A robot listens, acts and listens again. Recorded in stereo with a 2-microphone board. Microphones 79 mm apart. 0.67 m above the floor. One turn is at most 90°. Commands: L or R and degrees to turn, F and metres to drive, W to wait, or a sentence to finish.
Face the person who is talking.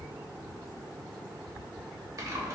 W
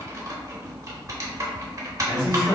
L60
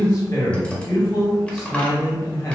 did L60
L50
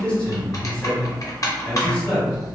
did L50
L20
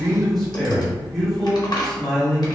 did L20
Found it: a man speaking, straight ahead.